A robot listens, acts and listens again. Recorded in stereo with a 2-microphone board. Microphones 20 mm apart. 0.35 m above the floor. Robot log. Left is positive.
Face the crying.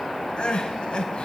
note: The crying: about 55° left or 125° left.
cmd yaw +55
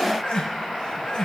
note: So it is at 55° left.
cmd yaw +55
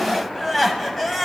note: The crying is now 10° left.
cmd yaw +10
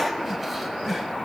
end: Facing the crying, 1 to 2 m away.